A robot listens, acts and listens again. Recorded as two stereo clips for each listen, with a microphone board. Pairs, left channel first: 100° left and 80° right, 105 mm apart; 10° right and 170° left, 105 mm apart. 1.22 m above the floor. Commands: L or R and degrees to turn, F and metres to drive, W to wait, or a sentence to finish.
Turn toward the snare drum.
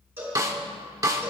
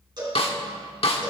R20
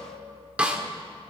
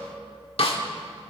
Facing the snare drum, 1 to 2 m away.